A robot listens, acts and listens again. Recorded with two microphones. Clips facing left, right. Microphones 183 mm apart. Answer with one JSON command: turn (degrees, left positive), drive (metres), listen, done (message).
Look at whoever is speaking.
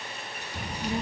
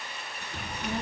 {"turn": 15}
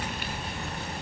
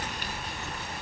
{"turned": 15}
{"turn": 145}
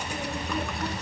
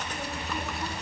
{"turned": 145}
{"done": "Facing the child speaking, 2 to 4 m away."}